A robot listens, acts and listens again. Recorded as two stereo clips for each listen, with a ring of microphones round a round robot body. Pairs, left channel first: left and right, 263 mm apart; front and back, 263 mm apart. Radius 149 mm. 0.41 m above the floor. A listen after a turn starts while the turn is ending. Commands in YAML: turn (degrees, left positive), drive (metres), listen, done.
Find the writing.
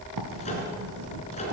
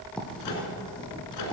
turn: -85
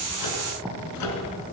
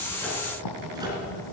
done: "Found it: writing, straight ahead."